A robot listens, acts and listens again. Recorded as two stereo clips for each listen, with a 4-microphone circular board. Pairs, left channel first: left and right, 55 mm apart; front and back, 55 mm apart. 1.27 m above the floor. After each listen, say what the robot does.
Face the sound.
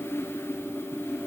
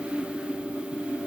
Keep listening.
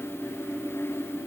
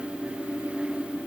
Keep listening.
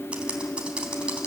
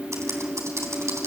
Turn 160° right.
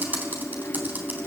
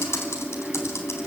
Turn 30° right.
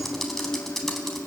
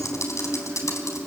Facing the typing on a keyboard, 2 to 4 m away.